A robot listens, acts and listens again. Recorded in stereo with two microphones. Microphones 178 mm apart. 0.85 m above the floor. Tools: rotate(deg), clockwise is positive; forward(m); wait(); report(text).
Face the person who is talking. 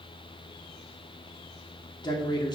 rotate(-25)
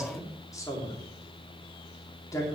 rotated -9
rotate(-20)
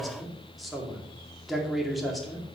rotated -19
report("Facing the man speaking.")